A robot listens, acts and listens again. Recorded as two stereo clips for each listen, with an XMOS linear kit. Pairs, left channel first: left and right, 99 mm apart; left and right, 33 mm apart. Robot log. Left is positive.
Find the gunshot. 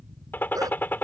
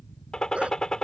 note: The gunshot: about 20° left or 160° left.
cmd yaw +20
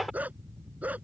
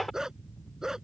end: Found it: a gunshot, straight ahead.